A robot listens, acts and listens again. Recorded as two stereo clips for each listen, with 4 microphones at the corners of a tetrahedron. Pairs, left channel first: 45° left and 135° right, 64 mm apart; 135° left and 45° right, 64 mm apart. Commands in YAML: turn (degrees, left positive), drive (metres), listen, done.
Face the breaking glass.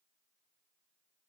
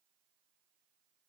listen: true
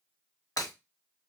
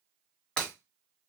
turn: 60
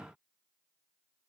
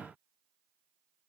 done: "Facing where the breaking glass came from. I can't hear it now."